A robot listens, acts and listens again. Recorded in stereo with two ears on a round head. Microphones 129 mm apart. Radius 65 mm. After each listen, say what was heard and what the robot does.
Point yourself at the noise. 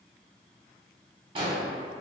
The explosion: about 35° right or 145° right. Turn 35° right.
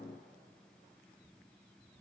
Keep listening.
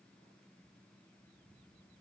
I heard an explosion, but can't make it out now. It was about straight ahead or 110° right.